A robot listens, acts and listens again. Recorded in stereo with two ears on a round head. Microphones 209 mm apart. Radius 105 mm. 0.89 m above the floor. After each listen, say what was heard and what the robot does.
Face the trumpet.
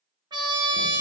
The trumpet: about 20° right or 160° right. Turn 20° right.
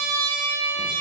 So it is at 140° right. Turn 140° right.
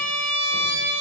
The trumpet is now 50° right. Turn 50° right.
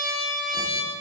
Facing the trumpet.